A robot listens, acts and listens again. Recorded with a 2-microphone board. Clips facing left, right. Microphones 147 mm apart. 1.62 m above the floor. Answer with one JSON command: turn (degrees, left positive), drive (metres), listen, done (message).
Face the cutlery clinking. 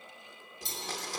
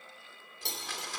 {"turn": -75}
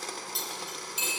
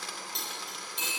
{"done": "Found it: cutlery clinking, straight ahead."}